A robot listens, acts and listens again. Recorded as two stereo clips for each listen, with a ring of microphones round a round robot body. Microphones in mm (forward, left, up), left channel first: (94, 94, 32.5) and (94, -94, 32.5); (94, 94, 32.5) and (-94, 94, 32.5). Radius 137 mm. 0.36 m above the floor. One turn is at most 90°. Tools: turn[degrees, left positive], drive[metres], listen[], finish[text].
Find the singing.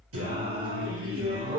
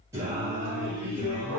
Thought: The singing: 95° right.
Action: turn[-90]
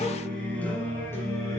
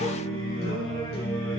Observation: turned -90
Thought: The singing is now 15° left.
Action: turn[15]
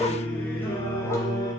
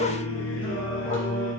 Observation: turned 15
Thought: The singing is now 15° left.
Action: turn[15]
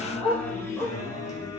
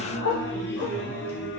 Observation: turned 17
Thought: The singing is now 15° left.
Action: turn[15]
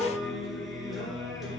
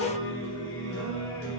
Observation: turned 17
Action: finish[Found it: singing, straight ahead, 2 to 4 m away.]